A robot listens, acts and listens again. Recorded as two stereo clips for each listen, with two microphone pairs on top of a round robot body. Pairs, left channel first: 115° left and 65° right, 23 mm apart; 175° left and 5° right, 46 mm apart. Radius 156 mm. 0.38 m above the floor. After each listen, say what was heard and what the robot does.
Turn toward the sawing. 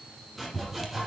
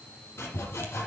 The sawing: 160° right. Turn 160° right.
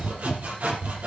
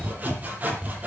The sawing is now 55° right. Turn 55° right.
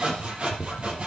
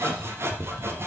The sawing is now 25° right. Turn 25° right.
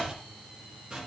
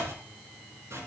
The sawing is now 15° right. Turn 15° right.
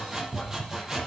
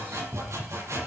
Facing the sawing, over 4 m away.